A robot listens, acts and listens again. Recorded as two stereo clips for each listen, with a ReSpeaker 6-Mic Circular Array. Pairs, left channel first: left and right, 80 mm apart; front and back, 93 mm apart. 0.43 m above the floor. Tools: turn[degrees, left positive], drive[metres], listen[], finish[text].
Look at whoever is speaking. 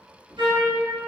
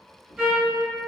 Action: listen[]
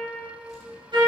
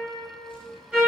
Action: listen[]
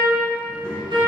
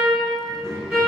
Thought: The child speaking: 125° left.
Action: turn[125]
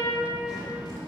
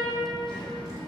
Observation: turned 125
Action: finish[Found it: a child speaking, straight ahead.]